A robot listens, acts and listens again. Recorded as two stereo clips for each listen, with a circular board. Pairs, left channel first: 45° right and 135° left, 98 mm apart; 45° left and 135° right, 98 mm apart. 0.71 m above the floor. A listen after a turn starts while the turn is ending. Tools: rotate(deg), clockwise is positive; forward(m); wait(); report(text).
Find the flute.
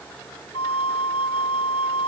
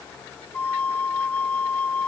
rotate(30)
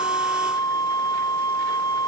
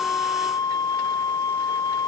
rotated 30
report("Facing the flute.")